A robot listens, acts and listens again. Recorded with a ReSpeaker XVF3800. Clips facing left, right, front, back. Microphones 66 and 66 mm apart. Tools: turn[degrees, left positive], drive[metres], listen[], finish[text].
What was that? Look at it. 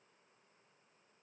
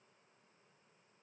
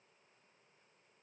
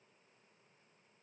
Action: listen[]
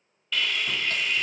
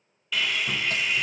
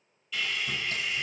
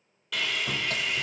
Thought: The sawing: 175° right.
Action: turn[-175]
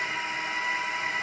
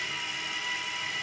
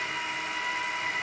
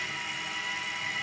Thought: The sawing is now 35° left.
Action: turn[35]
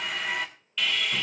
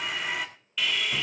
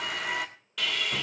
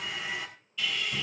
Action: finish[Found it: sawing, straight ahead.]